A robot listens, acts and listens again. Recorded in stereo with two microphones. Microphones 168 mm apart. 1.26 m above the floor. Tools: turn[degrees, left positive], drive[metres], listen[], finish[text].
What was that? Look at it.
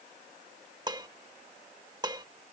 Thought: The dishes clattering: about 25° right or 155° right.
Action: turn[-25]
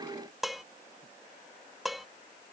Action: finish[Found it: dishes clattering, straight ahead.]